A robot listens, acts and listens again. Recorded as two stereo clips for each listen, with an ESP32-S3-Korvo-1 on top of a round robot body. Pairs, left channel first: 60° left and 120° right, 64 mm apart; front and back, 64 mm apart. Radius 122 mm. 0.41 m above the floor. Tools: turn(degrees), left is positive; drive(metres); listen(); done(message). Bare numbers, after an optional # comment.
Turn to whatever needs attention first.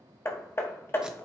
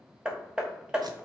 listen()
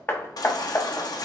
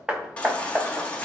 # The baby crying: 70° left.
turn(70)
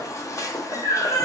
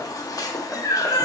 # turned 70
# The baby crying is now 20° left.
turn(20)
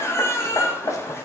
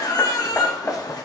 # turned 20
# The baby crying is now 10° left.
turn(10)
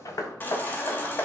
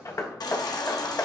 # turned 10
done("Facing the baby crying.")